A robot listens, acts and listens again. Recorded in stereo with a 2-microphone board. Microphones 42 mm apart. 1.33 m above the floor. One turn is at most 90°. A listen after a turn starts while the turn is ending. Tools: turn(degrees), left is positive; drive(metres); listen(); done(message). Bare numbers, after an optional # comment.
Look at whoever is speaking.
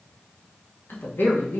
# The woman speaking: about 60° left or 120° left.
turn(60)
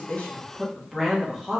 done("Found it: a woman speaking, straight ahead.")